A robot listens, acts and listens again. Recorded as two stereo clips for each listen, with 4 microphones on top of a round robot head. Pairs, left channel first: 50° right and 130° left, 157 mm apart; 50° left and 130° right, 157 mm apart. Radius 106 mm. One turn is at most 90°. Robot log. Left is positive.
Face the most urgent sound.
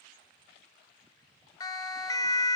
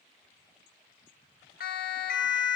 note: The siren: 20° left.
cmd yaw +20
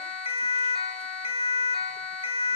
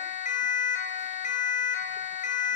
end: Found it: a siren, straight ahead, 2 to 4 m away.